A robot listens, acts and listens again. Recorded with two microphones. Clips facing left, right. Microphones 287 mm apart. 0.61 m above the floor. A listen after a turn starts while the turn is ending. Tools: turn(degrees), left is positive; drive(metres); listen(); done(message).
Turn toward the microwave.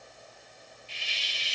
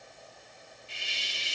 listen()
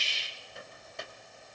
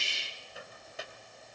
turn(degrees=-30)
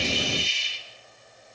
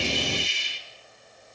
listen()
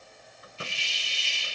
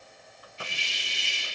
listen()
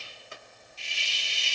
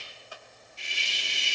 turn(degrees=30)
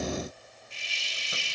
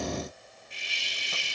listen()
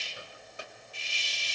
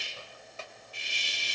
turn(degrees=15)
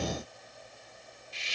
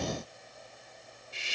listen()
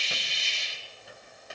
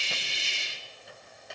done("Facing the microwave.")